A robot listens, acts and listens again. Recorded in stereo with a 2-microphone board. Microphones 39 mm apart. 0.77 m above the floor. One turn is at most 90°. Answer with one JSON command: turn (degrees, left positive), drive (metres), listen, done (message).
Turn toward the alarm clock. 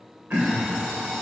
{"turn": -30}
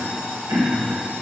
{"turn": -90}
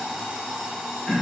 {"turn": -20}
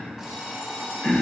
{"done": "Facing the alarm clock, 1 to 2 m away."}